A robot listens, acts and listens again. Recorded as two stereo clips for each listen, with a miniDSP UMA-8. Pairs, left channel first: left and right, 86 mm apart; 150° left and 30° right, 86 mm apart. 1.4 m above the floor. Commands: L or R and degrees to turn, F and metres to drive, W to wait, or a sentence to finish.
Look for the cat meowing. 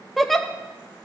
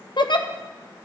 W
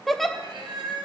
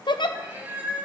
R100
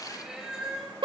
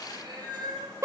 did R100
R10
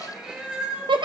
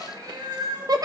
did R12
R15
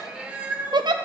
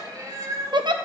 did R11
R35
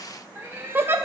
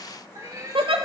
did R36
R45
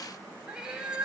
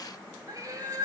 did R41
R15
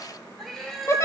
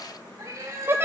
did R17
Found it: a cat meowing, straight ahead.